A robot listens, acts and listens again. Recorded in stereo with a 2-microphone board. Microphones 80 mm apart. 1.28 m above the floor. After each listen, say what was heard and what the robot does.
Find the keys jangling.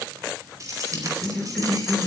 The keys jangling: about 45° right or 135° right. Turn 45° right.
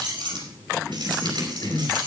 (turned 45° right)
So it is at 70° right. Turn 70° right.
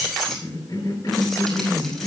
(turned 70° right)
Facing the keys jangling.